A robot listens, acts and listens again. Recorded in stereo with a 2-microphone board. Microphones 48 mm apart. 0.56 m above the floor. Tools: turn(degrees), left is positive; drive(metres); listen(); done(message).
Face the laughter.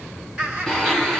turn(degrees=-15)
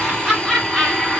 turn(degrees=30)
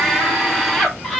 turn(degrees=30)
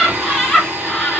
turn(degrees=30)
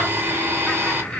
turn(degrees=15)
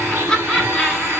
turn(degrees=30)
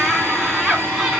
turn(degrees=-15)
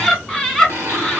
done("Facing the laughter, 1 to 2 m away.")